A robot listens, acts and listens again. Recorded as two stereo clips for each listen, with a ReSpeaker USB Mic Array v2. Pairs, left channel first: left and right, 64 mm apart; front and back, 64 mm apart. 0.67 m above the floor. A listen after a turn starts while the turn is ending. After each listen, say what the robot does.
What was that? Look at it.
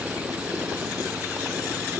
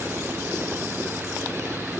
Keep listening.
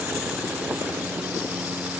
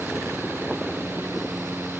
Keep listening.
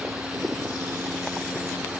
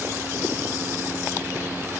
I can't make out anything to turn to.